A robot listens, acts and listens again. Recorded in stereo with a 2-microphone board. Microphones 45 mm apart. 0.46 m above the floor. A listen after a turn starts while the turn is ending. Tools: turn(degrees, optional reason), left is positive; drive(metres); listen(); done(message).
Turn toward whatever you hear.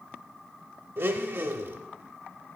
turn(degrees=-60, reason="The blender: about 60° right or 120° right.")
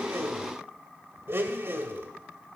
turn(degrees=-60, reason="So it is at 60° right.")
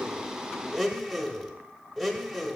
done("Facing the blender, under 1 m away.")